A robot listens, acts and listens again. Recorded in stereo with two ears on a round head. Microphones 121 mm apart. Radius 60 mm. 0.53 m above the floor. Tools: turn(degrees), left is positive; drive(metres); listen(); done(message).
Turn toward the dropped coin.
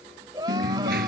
turn(degrees=-90)
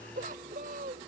done("Facing where the dropped coin came from. I can't hear it now.")